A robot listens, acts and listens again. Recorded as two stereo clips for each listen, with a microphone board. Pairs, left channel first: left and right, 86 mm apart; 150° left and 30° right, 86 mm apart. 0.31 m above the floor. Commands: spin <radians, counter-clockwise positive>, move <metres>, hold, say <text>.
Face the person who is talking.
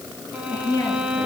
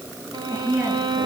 spin 0.44
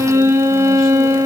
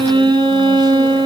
hold
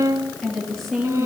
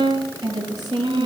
say Found it: a woman speaking, straight ahead, over 4 m away.